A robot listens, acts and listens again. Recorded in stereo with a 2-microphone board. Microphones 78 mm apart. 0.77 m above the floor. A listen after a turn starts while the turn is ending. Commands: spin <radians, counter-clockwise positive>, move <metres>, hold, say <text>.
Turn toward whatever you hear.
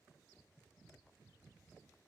hold
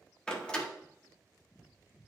spin 0.52
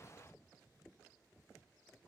hold
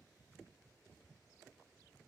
say I heard a door slam, but can't make it out now. It was about 15° right or 135° left.